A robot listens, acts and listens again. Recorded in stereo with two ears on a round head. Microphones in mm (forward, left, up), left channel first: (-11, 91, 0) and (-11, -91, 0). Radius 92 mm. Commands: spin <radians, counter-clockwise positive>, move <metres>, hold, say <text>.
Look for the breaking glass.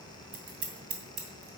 hold
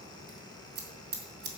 hold
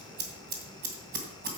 say I can't make out breaking glass to turn to.